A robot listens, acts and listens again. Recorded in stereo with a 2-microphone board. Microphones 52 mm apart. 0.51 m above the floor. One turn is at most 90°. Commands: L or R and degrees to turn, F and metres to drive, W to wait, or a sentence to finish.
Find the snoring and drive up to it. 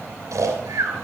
R90
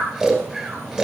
R10
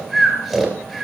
F1.0
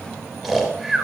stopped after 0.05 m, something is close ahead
Something is in my way. I am facing the snoring but have not reached it.